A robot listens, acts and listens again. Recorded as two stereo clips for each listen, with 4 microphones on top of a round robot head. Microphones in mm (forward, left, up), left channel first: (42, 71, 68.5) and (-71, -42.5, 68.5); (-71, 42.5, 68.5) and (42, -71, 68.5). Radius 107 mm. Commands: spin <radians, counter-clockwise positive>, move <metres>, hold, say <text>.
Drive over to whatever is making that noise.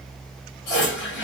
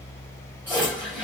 spin 0.61
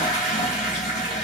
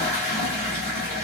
spin -0.26
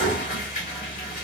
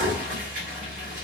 move 1.0
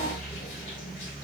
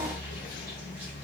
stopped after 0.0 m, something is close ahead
hold
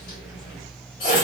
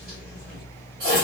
say Blocked. The toilet flushing is further on, straight ahead.